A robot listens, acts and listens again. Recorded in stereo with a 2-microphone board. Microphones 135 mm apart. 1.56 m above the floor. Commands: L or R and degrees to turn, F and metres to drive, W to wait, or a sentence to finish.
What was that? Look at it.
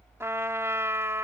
R20
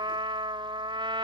R145
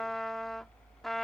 Facing the trumpet.